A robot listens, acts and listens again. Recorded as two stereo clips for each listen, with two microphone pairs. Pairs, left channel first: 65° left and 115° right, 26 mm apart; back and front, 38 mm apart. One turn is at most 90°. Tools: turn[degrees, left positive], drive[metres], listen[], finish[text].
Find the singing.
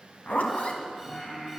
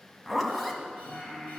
Thought: The singing: 110° left.
Action: turn[90]
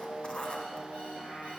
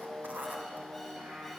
Thought: The singing is now 20° left.
Action: turn[20]
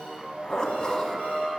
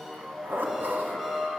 Thought: The singing is now 15° right.
Action: turn[-15]
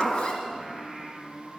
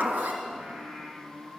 Thought: The singing is now 20° right.
Action: turn[-20]
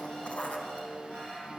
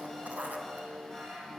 Action: finish[Facing the singing.]